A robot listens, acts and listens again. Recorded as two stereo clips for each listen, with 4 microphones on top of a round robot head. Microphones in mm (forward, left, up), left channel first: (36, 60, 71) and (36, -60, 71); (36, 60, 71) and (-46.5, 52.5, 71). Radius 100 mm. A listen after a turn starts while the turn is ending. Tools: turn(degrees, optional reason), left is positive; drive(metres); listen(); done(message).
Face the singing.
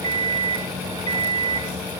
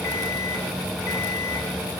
listen()
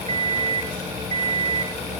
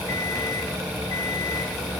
listen()
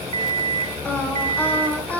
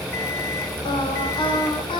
turn(degrees=15, reason="The singing: 15° left.")
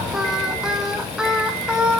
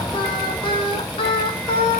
done("Facing the singing, over 4 m away.")